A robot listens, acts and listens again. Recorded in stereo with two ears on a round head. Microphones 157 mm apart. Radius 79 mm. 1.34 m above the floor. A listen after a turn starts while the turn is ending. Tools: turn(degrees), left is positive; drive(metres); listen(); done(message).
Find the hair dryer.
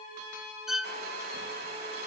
turn(degrees=-60)
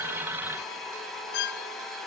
done("Facing the hair dryer.")